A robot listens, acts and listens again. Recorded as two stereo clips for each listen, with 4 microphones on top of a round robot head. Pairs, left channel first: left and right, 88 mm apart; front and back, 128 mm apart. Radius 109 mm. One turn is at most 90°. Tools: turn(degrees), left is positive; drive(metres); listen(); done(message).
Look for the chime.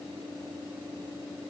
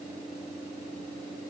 listen()
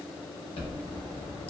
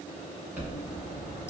turn(degrees=90)
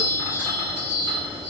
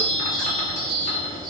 turn(degrees=25)
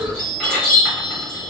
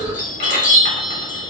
done("Found it: a chime, straight ahead.")